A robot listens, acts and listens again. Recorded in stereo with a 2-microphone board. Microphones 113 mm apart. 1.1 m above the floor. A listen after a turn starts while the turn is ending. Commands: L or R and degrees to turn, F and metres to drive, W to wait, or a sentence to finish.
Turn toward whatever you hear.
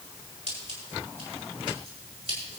R65
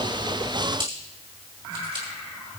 R45
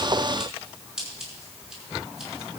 Facing the scissors.